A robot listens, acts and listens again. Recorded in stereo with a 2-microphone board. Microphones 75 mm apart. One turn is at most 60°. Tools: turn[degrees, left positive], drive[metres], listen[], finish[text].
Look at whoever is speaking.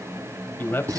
Thought: The man speaking: about 25° left or 155° left.
Action: turn[25]
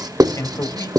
Thought: So it is at 125° left.
Action: turn[60]
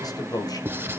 Thought: The man speaking is now 70° left.
Action: turn[60]
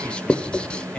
Thought: The man speaking is now 15° left.
Action: turn[15]
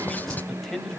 Action: finish[Facing the man speaking.]